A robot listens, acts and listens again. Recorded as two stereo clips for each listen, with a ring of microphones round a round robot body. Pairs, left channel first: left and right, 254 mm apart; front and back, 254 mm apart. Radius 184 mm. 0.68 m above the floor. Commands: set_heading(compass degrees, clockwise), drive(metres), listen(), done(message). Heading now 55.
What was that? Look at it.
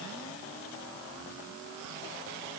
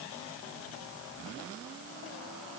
listen()
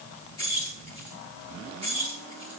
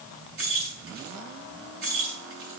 set_heading(270)
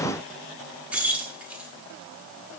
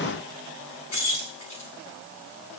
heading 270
done("Facing the keys jangling.")